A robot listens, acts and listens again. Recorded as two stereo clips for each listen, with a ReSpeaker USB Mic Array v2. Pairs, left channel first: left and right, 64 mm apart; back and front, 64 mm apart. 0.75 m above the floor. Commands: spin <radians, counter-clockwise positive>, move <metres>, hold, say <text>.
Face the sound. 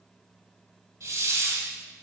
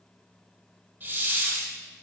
spin -1.05
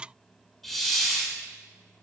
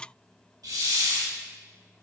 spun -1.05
say Facing the hiss, 1 to 2 m away.